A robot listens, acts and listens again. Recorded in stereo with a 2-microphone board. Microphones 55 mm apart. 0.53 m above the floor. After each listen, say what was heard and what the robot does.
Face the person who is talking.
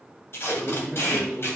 Turn 30° left.
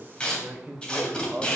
So it is at 25° right. Turn 25° right.
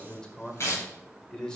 The man speaking is now 15° left. Turn 15° left.
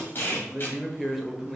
Found it: a man speaking, straight ahead, 1 to 2 m away.